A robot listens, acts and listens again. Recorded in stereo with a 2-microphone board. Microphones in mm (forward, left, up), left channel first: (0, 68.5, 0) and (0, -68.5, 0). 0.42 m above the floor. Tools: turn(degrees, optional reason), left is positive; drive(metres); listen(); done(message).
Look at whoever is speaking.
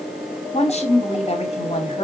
turn(degrees=50, reason="The woman speaking: about 50° left or 130° left.")
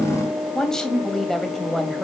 done("Facing the woman speaking, 2 to 4 m away.")